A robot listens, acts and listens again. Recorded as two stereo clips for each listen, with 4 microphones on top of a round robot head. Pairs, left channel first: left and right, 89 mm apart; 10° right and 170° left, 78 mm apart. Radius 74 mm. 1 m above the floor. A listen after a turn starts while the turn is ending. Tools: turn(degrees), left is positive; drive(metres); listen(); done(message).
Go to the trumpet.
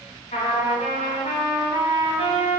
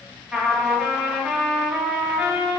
turn(degrees=90)
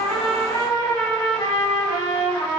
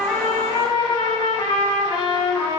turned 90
turn(degrees=25)
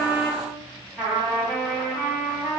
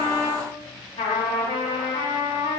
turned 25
drive(metres=1.0)
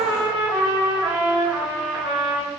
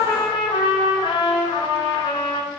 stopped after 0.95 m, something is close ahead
turn(degrees=-10)
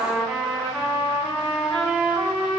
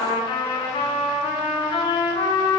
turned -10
done("I am next to the trumpet.")